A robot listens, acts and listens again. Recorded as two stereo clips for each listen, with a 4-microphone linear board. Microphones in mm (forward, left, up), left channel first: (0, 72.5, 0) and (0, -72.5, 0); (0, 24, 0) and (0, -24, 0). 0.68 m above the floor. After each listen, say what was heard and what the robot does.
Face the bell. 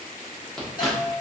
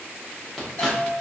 The bell: about 65° left or 115° left. Turn 65° left.
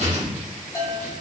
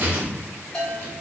So it is at 25° left. Turn 25° left.
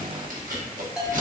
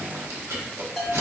Found it: a bell, straight ahead.